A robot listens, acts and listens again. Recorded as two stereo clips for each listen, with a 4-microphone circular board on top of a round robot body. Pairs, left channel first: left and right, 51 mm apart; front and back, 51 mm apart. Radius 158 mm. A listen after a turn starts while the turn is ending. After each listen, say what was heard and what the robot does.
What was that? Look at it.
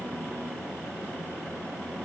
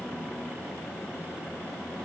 Keep listening.
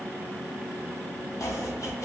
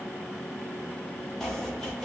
The chopping: 85° left. Turn 85° left.
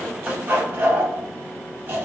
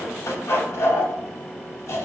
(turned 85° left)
The chopping is now 30° right. Turn 30° right.
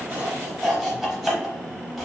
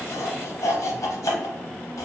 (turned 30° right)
Facing the chopping.